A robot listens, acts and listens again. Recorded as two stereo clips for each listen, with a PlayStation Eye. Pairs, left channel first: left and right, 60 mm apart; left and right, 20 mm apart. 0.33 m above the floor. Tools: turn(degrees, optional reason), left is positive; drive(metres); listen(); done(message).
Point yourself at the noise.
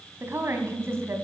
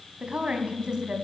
turn(degrees=-45, reason="The woman speaking: about 45° right or 135° right.")
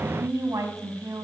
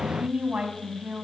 turn(degrees=-85, reason="So it is at 85° right.")
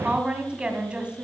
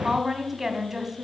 turn(degrees=-20, reason="The woman speaking is now 20° right.")
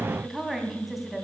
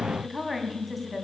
done("Facing the woman speaking.")